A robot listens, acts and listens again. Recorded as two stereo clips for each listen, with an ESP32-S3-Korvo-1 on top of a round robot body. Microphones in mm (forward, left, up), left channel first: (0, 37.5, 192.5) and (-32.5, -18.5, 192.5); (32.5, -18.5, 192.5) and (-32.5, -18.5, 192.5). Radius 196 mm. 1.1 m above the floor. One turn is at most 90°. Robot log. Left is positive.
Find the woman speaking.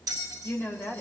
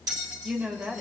note: The woman speaking: 115° left.
cmd yaw +90
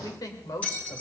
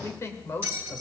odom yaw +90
note: The woman speaking is now 50° left.
cmd yaw +50
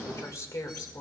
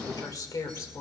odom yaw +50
note: The woman speaking is now 25° left.
cmd yaw +25
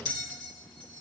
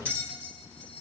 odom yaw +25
cmd idle
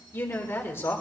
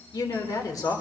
note: The woman speaking is now 15° left.
cmd yaw +15
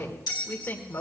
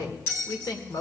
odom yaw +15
end: Found it: a woman speaking, straight ahead, 2 to 4 m away.